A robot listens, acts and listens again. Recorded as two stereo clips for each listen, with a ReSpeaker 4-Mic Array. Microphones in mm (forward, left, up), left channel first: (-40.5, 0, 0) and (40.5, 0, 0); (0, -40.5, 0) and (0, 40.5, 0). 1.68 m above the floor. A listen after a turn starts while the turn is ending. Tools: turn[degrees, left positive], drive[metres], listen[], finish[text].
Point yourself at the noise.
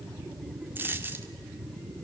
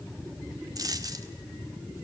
Thought: The dropped coin: 60° left.
Action: turn[60]
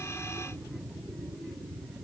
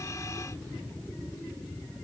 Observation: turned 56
Action: finish[Facing where the dropped coin came from. I can't hear it now.]